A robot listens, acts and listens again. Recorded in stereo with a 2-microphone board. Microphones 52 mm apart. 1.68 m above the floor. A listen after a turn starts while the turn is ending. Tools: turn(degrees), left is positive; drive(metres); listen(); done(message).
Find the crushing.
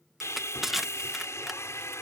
turn(degrees=-30)
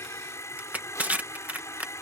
turn(degrees=-150)
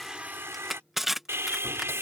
done("Found it: crushing, straight ahead.")